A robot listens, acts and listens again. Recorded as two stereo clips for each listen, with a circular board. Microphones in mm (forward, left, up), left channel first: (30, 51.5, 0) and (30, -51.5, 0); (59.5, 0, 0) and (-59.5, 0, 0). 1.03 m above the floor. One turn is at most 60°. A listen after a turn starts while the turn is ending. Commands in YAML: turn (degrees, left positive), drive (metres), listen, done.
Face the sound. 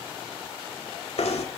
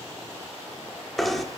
turn: 60
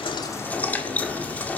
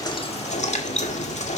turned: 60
turn: 15
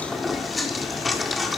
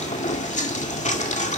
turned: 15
done: "Facing the knocking, 1 to 2 m away."